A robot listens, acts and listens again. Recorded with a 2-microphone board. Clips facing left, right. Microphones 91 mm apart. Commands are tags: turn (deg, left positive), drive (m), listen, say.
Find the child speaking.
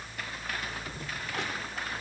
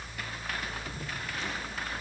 <listen/>
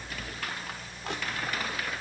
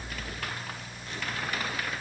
<listen/>
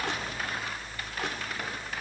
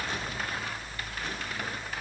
<say>I can't make out a child speaking.</say>